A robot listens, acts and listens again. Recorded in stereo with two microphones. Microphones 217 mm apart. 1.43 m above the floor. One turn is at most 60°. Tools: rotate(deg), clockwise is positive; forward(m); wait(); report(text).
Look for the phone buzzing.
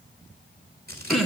wait()
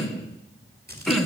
wait()
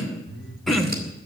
rotate(50)
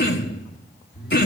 report("Facing the phone buzzing.")